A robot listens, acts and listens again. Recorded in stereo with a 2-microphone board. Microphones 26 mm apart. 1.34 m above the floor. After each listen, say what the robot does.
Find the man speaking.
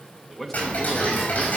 Turn 30° left.
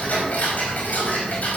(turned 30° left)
Keep listening.
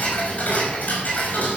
Keep listening.
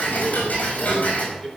Turn 30° left.
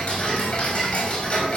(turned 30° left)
Keep listening.
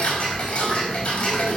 Keep listening.
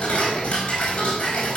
I heard a man speaking, but can't make it out now. It was about 25° right or 145° left.